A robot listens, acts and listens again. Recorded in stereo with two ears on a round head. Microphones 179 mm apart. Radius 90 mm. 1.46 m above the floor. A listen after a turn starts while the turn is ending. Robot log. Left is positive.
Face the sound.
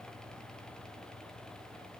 cmd idle
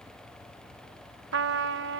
note: The trumpet: about 65° right or 115° right.
cmd yaw -65
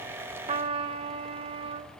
note: So it is at 35° right.
cmd yaw -35
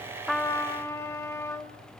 note: The trumpet is now 15° left.
cmd yaw +15
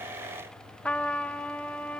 note: The trumpet is now 10° left.
cmd yaw +10
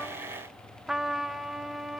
end: Found it: a trumpet, straight ahead.